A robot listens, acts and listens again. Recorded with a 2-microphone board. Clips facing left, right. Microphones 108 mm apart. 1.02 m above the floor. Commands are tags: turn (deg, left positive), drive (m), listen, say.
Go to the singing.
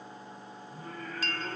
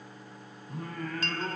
<turn deg="-75"/>
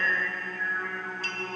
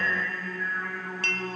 <drive m="1.0"/>
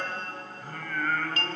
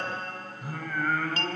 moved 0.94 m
<turn deg="-10"/>
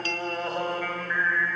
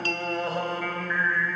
<drive m="1.0"/>
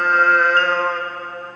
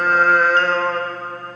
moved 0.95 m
<drive m="1.0"/>
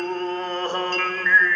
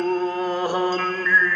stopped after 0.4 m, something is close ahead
<turn deg="-10"/>
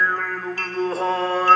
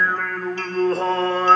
<say>I am next to the singing.</say>